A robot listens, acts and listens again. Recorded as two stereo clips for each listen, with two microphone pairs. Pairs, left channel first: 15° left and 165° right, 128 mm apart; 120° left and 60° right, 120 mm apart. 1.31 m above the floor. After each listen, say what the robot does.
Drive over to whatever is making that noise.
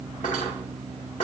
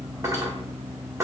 Drive 1.0 m forward.
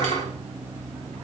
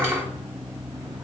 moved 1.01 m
Turn 10° left.
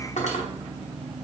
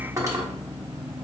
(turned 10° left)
Drive 1.0 m forward.
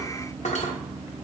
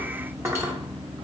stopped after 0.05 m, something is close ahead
Turn 10° left.
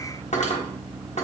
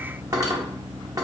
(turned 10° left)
I am next to the cutlery clinking.